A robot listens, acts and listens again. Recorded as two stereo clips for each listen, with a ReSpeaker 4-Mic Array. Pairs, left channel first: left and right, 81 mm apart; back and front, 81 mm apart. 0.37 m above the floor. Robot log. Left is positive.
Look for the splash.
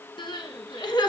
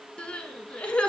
cmd idle
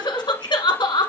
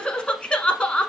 cmd idle
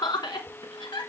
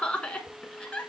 end: I can't make out a splash, only crying.